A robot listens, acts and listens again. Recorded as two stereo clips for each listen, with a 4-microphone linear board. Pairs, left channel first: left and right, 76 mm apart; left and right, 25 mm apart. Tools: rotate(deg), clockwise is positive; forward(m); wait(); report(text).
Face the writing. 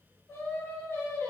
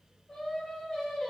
wait()
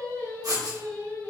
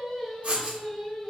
rotate(55)
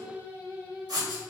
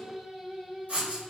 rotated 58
rotate(65)
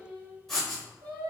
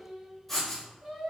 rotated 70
report("Found it: writing, straight ahead.")